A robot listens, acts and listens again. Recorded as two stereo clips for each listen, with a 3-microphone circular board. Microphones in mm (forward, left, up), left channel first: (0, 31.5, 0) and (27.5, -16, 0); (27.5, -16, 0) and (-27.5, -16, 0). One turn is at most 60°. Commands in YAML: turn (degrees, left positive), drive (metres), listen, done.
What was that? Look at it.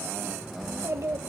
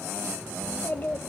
turn: -50
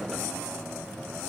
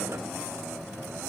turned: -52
listen: true
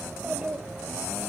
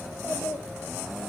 done: "Facing the child speaking."